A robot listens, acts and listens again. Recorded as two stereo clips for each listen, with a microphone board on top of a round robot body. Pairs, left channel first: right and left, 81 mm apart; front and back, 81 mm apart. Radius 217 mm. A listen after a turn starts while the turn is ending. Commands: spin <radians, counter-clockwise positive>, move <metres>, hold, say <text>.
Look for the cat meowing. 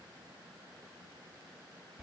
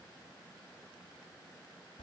hold
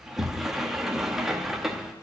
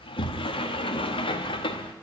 hold
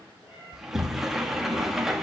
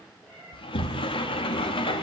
spin -1.48
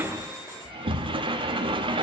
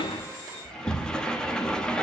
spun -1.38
hold
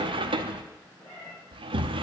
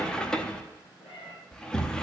spin -0.26
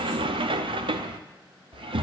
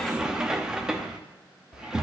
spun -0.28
hold
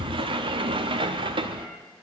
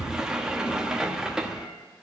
hold
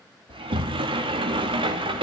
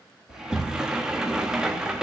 say I heard a cat meowing from this way, but can't make it out now.